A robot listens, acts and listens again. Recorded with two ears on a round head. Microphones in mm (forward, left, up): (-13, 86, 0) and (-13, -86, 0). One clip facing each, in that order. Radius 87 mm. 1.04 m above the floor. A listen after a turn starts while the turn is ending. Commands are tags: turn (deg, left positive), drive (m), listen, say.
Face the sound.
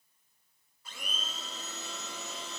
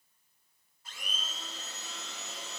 <turn deg="90"/>
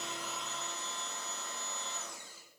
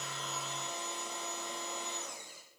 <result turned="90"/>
<turn deg="-15"/>
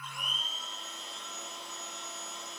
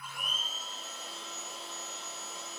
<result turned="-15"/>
<say>Found it: a blender, straight ahead, over 4 m away.</say>